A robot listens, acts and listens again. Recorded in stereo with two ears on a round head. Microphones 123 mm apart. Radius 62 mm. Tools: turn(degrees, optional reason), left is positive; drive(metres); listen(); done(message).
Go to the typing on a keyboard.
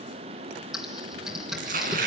turn(degrees=-30)
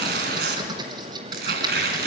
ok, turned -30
turn(degrees=-150, reason="So it is at 150° right.")
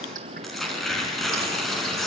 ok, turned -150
listen()
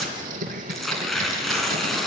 turn(degrees=-65, reason="The typing on a keyboard is now 65° right.")
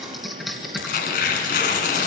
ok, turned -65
drive(metres=1.0)
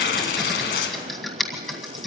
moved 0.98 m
drive(metres=1.0)
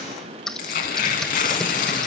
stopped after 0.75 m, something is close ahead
done("Arrived at the typing on a keyboard, straight ahead.")